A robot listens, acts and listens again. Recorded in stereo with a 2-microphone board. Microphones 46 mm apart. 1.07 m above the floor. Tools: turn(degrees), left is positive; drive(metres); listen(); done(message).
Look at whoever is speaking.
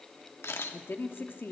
turn(degrees=50)
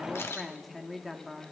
done("Facing the woman speaking, 1 to 2 m away.")